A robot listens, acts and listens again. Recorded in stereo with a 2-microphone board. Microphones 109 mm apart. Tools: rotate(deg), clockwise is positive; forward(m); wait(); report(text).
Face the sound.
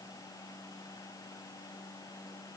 wait()
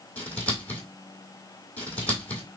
rotate(-30)
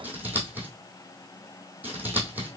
rotate(15)
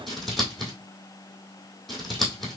report("Found it: scissors, straight ahead.")